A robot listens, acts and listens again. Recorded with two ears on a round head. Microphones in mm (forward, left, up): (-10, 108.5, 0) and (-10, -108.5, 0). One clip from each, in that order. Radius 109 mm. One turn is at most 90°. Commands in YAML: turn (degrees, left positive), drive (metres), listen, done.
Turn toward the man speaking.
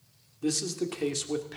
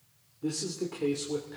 turn: 70
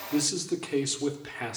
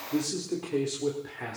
turn: 65
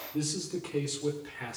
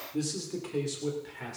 turn: 15
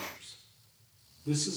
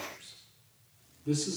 done: "Facing the man speaking."